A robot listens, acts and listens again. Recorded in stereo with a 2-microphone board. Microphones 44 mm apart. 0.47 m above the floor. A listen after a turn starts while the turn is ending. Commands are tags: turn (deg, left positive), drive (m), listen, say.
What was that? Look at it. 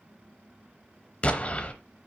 <turn deg="30"/>
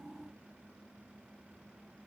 <listen/>
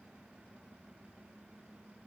<say>I heard an explosion, but can't make it out now. It was about straight ahead or 120° left.</say>